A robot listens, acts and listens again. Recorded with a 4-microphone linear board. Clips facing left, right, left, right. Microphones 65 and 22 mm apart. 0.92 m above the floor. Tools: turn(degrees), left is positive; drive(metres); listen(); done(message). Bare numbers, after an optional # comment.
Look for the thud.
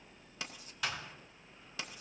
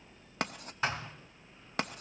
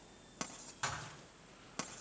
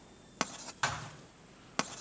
# The thud: about 35° right or 145° right.
turn(-35)
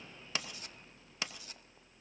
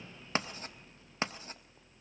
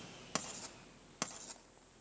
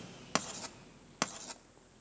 listen()
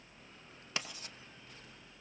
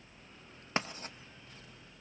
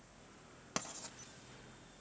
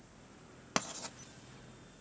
done("I heard a thud, but can't make it out now. It was about straight ahead or 110° right.")